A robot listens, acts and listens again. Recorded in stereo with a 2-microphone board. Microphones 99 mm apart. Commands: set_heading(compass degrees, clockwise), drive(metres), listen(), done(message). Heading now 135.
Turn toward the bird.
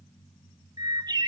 set_heading(180)
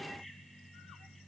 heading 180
listen()
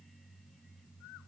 listen()
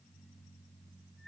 done("I heard a bird, but can't make it out now. It was about straight ahead or 90° right.")